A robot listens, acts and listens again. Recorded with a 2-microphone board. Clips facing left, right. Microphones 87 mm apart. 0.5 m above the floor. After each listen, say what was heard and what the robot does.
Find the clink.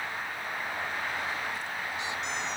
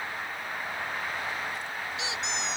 Keep listening.
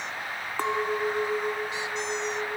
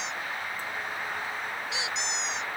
Turn 90° left.
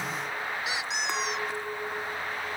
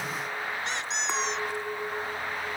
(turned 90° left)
Facing the clink.